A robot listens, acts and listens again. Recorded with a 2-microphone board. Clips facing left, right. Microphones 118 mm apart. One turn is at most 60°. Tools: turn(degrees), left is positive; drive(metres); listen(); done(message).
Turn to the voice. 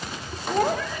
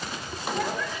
turn(degrees=45)
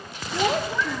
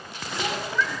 turn(degrees=60)
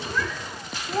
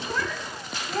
turn(degrees=15)
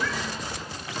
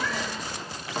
listen()
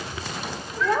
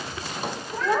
done("Found it: a child speaking, straight ahead.")